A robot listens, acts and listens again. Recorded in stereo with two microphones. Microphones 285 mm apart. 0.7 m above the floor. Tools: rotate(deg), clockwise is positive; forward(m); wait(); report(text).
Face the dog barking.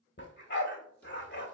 rotate(-40)
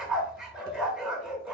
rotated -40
report("Facing the dog barking.")